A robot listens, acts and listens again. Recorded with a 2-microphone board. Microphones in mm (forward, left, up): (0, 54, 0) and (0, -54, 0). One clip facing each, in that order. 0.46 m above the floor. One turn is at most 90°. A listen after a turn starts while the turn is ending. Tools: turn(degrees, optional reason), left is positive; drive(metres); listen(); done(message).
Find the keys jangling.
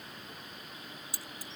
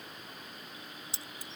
turn(degrees=-25, reason="The keys jangling: about 25° right or 155° right.")
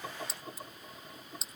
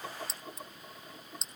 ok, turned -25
done("Found it: keys jangling, straight ahead.")